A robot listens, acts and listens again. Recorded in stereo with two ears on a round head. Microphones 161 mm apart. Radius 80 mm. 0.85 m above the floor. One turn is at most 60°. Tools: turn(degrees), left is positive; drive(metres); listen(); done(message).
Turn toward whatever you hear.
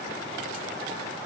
listen()
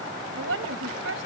turn(degrees=-60)
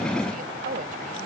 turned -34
turn(degrees=-50)
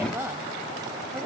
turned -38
turn(degrees=-15)
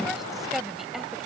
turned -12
done("Facing the woman speaking.")